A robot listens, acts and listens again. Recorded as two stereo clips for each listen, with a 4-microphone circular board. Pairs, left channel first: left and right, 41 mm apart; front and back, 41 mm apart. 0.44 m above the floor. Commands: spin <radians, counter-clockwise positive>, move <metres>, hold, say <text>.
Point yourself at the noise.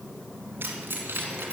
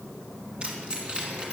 spin -2.09
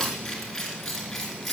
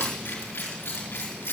spin 0.17
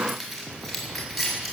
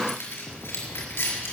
say Facing the keys jangling, over 4 m away.